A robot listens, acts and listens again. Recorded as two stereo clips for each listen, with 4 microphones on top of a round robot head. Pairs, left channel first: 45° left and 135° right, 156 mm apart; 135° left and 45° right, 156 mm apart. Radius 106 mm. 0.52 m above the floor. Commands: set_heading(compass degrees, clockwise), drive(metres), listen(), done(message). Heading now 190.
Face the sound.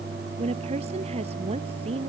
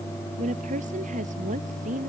set_heading(275)
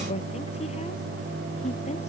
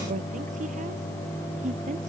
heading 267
done("Found it: a woman speaking, straight ahead.")